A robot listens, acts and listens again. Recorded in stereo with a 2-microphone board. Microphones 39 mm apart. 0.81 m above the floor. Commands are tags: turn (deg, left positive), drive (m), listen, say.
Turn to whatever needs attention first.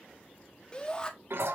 <turn deg="25"/>
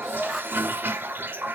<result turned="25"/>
<say>Found it: a shout, straight ahead, 1 to 2 m away.</say>